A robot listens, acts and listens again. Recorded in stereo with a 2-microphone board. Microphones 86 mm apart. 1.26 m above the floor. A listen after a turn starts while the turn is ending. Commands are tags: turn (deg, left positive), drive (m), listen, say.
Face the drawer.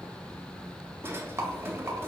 <turn deg="-30"/>
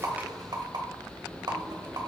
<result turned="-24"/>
<listen/>
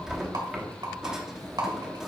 <turn deg="-10"/>
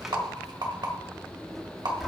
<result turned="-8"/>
<say>Facing the drawer, 1 to 2 m away.</say>